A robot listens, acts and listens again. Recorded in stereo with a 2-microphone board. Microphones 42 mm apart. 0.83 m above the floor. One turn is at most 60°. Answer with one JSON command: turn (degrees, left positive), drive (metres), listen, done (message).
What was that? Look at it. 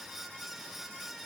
{"listen": true}
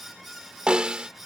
{"turn": -25}
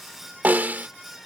{"turn": -60}
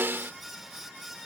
{"turn": -60}
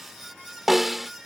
{"done": "Found it: a snare drum, straight ahead."}